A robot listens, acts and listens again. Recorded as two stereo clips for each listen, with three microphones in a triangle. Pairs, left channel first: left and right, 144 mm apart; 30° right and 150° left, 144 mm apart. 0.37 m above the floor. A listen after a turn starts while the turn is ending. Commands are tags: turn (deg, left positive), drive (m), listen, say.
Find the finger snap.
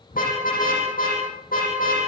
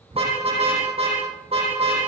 <listen/>
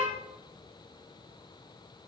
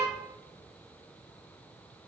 <listen/>
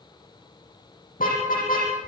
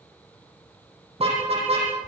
<say>I can't make out a finger snap, only a car horn.</say>